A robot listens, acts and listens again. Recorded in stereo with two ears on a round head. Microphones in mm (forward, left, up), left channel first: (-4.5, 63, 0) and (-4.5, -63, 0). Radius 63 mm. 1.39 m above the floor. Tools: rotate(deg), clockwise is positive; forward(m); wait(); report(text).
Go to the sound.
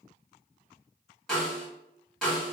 rotate(-30)
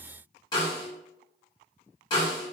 rotate(-145)
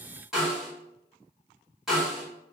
forward(1.0)
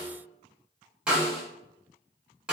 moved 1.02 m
rotate(10)
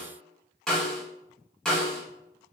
forward(1.0)
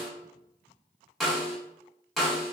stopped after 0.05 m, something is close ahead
report("Arrived at the snare drum, straight ahead.")